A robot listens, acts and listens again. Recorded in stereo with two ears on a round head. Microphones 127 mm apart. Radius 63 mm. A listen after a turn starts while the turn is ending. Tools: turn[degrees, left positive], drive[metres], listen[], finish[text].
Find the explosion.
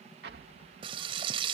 Action: turn[-90]
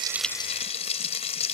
Action: finish[Facing where the explosion came from. I can't hear it now.]